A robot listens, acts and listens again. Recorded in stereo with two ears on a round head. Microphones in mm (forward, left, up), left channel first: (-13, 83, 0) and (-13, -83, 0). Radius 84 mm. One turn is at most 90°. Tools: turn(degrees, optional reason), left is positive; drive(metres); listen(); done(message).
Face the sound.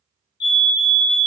turn(degrees=60, reason="The fire alarm: about 60° left or 120° left.")
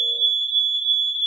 turn(degrees=35, reason="So it is at 35° left.")
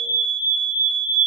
turn(degrees=-20, reason="The fire alarm is now 20° right.")
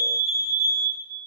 done("Found it: a fire alarm, straight ahead, 2 to 4 m away.")